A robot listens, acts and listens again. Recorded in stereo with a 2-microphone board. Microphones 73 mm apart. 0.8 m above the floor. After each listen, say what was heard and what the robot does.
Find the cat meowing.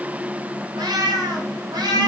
Turn 90° right.
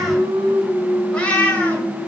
So it is at 20° left. Turn 20° left.
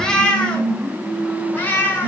The cat meowing is now 25° left. Turn 25° left.
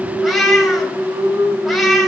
Found it: a cat meowing, straight ahead, 2 to 4 m away.